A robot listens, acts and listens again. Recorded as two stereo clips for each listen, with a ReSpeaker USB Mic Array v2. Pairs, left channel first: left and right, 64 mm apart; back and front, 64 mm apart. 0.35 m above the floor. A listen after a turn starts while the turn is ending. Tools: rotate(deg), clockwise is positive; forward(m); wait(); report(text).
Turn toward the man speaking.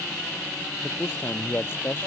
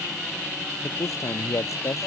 rotate(-145)
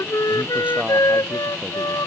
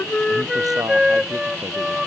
wait()
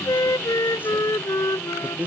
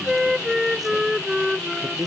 rotate(25)
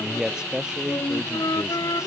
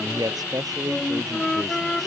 rotate(10)
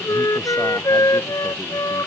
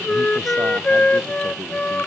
wait()
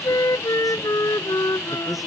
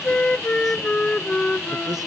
wait()
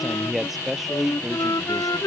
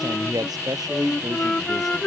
report("Facing the man speaking.")